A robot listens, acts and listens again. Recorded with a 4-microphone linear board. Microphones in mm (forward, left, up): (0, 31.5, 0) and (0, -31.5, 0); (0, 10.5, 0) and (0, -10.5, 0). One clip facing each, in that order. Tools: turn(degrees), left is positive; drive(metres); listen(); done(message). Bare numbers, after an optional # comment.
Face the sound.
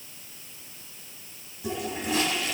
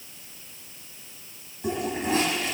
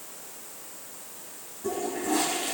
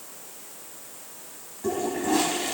# The toilet flushing: about 45° right or 135° right.
turn(-45)
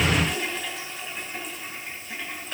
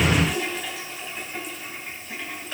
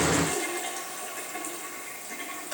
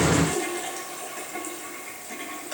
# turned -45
done("Found it: a toilet flushing, straight ahead.")